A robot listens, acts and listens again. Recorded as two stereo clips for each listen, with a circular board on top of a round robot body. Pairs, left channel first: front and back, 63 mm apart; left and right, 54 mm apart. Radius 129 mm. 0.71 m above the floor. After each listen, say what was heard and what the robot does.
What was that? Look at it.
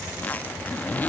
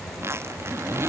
The zipper: 60° right. Turn 60° right.
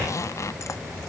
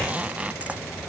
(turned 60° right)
The zipper is now 30° right. Turn 30° right.
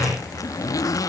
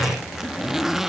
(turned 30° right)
Found it: a zipper, straight ahead.